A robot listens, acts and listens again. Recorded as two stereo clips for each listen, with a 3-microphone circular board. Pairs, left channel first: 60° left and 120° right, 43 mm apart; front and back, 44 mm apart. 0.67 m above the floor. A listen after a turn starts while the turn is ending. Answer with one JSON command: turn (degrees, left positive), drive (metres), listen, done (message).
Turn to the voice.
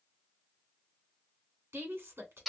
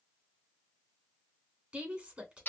{"turn": -125}
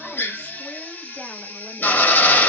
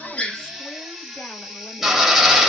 {"listen": true}
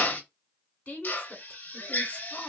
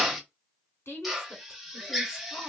{"done": "Facing the woman speaking."}